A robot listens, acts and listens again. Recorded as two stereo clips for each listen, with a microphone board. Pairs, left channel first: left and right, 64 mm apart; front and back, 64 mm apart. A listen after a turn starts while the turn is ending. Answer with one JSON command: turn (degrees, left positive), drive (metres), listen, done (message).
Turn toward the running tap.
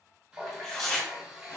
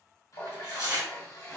{"turn": -20}
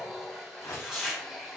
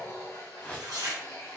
{"done": "Facing the running tap, 1 to 2 m away."}